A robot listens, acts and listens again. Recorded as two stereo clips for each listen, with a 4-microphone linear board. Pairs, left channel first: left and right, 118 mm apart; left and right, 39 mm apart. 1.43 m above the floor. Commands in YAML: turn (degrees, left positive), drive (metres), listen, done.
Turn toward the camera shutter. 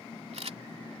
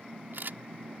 turn: -70
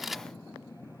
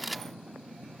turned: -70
done: "Found it: a camera shutter, straight ahead."